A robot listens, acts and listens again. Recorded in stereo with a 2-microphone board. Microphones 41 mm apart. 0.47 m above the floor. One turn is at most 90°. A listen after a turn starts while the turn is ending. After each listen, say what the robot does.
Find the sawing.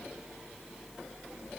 Keep listening.
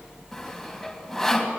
Turn 30° left.
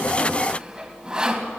Turn 25° right.
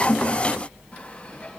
Keep listening.
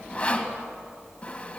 Turn 25° left.
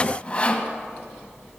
Turn 25° left.
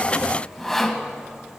Facing the sawing.